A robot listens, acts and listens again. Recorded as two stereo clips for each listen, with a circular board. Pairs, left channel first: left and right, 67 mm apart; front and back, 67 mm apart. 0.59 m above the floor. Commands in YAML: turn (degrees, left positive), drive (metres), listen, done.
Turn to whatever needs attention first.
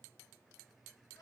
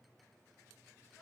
listen: true
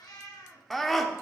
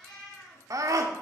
turn: 175
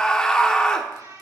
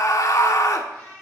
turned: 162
turn: 15
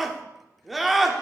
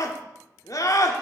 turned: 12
done: "Found it: a scream, straight ahead."